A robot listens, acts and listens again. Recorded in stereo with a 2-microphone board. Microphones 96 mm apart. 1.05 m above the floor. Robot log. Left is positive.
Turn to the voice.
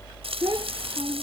note: The child speaking: about 55° right or 125° right.
cmd yaw -55
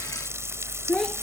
end: Found it: a child speaking, straight ahead.